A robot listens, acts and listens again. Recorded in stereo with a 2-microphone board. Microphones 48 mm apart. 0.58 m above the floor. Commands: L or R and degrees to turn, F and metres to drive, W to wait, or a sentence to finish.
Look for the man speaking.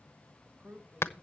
R35
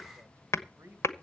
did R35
R110
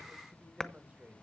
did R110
R35
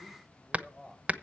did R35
Facing the man speaking, 2 to 4 m away.